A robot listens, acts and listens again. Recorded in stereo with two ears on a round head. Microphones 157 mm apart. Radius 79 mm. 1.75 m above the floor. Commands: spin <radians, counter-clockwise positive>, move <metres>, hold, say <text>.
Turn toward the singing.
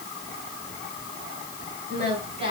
spin -0.61
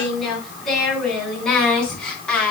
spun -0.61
say Facing the singing.